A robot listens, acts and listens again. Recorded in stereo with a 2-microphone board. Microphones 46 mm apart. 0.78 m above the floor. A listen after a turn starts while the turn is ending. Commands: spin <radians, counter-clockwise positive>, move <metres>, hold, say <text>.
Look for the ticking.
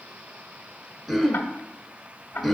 spin 0.79
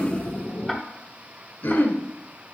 say Facing the ticking.